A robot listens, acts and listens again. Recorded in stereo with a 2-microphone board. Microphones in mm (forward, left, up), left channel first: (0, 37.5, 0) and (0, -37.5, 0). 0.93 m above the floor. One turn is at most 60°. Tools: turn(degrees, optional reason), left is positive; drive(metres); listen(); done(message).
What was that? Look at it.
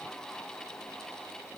listen()
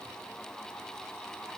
listen()
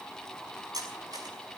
turn(degrees=-60, reason="The cutlery clinking: about 60° right or 120° right.")
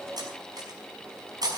turn(degrees=-60, reason="So it is at 60° right.")
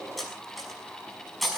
done("Found it: cutlery clinking, straight ahead, over 4 m away.")